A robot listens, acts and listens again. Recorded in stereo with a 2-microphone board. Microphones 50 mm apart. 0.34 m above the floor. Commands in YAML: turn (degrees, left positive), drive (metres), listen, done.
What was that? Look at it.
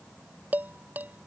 turn: -35
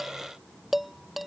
done: "Found it: dishes clattering, straight ahead."